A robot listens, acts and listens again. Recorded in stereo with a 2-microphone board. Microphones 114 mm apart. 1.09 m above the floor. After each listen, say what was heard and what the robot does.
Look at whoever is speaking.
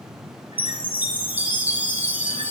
Keep listening.
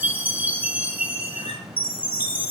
Keep listening.
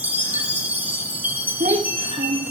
The child speaking: about 70° right or 110° right. Turn 70° right.
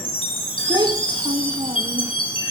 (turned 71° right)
So it is at 40° right. Turn 40° right.
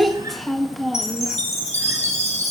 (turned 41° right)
Found it: a child speaking, straight ahead, 1 to 2 m away.